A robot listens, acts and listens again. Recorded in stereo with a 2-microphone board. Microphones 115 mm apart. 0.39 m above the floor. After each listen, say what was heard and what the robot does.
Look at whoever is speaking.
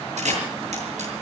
Keep listening.
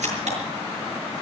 Keep listening.
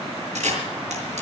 I can't make out anyone speaking, only a camera shutter.